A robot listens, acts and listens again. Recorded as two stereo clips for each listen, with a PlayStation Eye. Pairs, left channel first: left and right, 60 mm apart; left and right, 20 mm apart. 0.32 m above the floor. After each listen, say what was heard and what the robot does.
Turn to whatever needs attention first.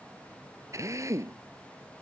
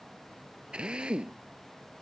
Keep listening.
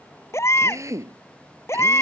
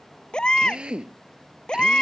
The baby crying: about 45° left or 135° left. Turn 45° left.
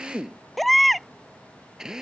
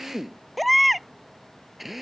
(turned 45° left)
Found it: a baby crying, straight ahead.